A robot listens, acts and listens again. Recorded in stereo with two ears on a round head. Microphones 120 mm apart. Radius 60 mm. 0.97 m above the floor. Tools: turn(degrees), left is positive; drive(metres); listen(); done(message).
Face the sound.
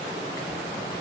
listen()
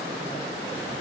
listen()
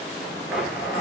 turn(degrees=-30)
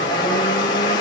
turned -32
turn(degrees=30)
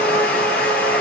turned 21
turn(degrees=10)
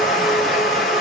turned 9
done("Facing the blender, 2 to 4 m away.")